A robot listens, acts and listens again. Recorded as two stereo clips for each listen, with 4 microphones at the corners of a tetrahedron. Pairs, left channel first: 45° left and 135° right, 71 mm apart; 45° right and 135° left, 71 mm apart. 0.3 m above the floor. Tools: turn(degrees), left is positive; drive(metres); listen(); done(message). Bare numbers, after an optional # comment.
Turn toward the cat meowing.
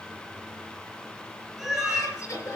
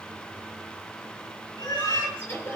# The cat meowing: 50° right.
turn(-50)
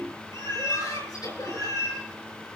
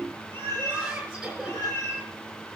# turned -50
# The cat meowing is now 10° left.
turn(10)
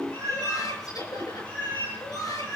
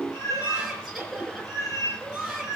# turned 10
done("Found it: a cat meowing, straight ahead, over 4 m away.")